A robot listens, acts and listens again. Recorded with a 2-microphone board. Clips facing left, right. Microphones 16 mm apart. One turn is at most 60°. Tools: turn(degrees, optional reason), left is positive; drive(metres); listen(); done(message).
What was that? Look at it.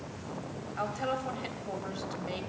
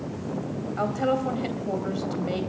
turn(degrees=-30)
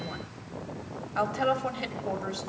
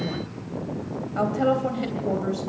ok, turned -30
turn(degrees=20, reason="So it is at 20° left.")
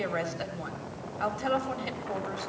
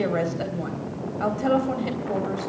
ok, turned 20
done("Facing the woman speaking, 2 to 4 m away.")